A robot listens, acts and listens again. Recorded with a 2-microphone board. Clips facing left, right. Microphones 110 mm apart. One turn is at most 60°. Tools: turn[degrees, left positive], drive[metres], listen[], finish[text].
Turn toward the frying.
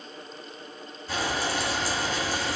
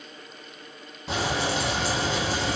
Action: turn[-60]
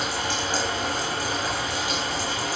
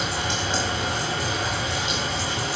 Thought: So it is at 20° right.
Action: turn[-20]
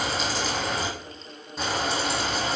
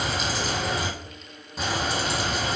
Action: finish[Found it: frying, straight ahead, 2 to 4 m away.]